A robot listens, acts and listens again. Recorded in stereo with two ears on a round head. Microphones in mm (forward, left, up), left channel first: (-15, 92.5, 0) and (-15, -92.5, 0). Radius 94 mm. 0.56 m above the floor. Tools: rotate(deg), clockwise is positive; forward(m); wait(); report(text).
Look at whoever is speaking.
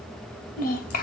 rotate(-50)
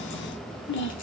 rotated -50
rotate(-55)
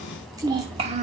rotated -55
rotate(35)
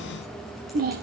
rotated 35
rotate(45)
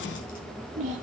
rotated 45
rotate(35)
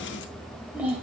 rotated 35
report("Found it: a child speaking, straight ahead, 2 to 4 m away.")